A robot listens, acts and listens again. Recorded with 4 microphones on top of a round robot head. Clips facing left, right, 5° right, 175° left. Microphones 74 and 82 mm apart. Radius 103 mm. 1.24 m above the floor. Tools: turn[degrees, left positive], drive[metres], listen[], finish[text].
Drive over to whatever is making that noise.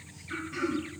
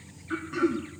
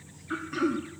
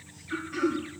Thought: The throat clearing: 45° right.
Action: turn[-45]
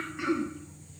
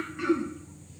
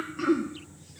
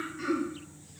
Action: drive[1.0]
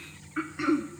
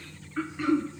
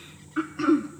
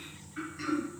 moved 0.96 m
Thought: The throat clearing is now 10° left.
Action: turn[10]
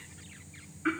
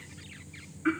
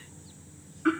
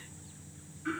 Action: drive[1.0]
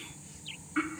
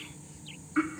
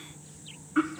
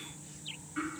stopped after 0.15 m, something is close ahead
Thought: The throat clearing is now 10° right.
Action: turn[-10]
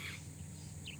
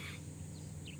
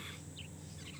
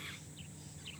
Action: listen[]
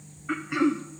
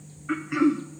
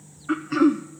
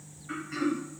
Action: finish[Arrived at the throat clearing, straight ahead.]